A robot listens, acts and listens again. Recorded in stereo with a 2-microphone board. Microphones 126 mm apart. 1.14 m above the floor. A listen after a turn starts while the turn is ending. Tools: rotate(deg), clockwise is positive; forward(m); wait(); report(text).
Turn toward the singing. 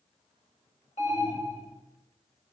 wait()
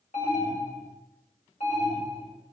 wait()
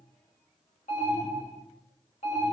report("I can't make out singing, only an alarm.")